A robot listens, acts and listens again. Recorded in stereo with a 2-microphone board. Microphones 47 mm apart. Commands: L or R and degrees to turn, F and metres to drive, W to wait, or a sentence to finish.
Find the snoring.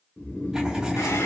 L30
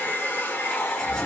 Facing the snoring, 1 to 2 m away.